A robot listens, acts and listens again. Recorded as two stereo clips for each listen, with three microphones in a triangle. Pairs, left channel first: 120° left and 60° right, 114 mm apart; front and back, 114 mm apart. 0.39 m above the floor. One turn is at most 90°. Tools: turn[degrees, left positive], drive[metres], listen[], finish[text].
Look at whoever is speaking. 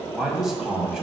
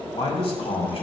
Thought: The man speaking: 25° left.
Action: turn[25]
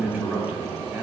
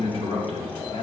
Thought: The man speaking is now 15° left.
Action: turn[15]
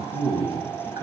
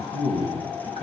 Action: finish[Facing the man speaking.]